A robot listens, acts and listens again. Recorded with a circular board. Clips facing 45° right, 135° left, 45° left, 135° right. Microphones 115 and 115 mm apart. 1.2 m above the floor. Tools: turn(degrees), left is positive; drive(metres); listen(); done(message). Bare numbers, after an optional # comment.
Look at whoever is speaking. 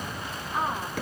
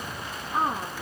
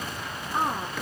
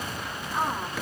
# The woman speaking: 90° left.
turn(90)
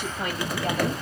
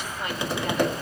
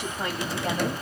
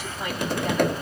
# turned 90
done("Found it: a woman speaking, straight ahead.")